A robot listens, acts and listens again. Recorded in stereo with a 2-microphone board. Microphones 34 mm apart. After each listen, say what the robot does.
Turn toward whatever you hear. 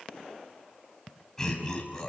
Turn 15° left.
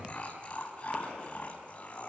Turn 35° left.
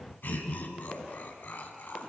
Turn 110° left.
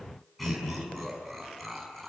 Facing the laughter.